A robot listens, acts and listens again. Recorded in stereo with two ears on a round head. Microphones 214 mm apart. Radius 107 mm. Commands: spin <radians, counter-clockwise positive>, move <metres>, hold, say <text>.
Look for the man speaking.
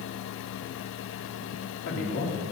spin 0.96
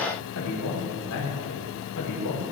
spin 1.22
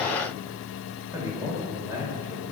spin -0.17
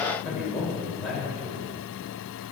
say Found it: a man speaking, straight ahead.